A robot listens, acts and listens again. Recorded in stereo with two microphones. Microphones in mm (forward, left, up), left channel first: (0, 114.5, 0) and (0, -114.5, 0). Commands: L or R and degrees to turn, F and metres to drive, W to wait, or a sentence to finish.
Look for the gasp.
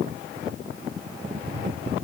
W
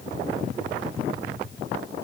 W
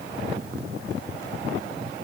I can't make out a gasp, only tapping.